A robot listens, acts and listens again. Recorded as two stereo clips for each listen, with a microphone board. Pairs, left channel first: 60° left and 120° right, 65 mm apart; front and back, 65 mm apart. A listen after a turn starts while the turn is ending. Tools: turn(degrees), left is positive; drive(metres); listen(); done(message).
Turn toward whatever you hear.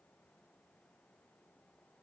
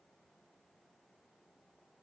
listen()
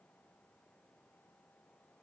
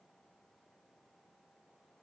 listen()
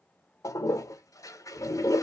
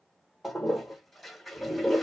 turn(degrees=90)
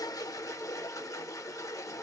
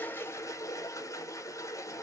turn(degrees=30)
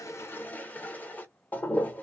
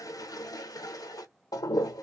done("Facing the toilet flushing, under 1 m away.")